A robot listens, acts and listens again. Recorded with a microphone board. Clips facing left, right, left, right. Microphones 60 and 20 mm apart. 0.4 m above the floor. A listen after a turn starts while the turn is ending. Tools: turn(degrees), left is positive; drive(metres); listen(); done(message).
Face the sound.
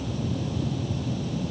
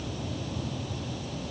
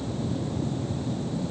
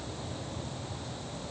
listen()
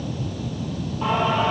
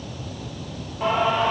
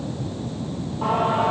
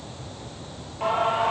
turn(degrees=-90)
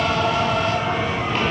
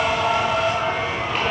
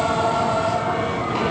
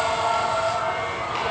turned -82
done("Found it: singing, straight ahead, 2 to 4 m away.")